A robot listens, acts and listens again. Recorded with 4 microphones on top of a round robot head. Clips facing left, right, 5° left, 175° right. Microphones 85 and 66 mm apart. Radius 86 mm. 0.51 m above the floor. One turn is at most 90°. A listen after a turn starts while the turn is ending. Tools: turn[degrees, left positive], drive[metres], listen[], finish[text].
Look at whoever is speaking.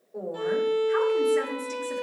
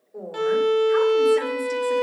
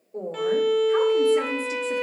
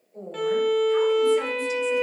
Action: finish[Facing the woman speaking, 2 to 4 m away.]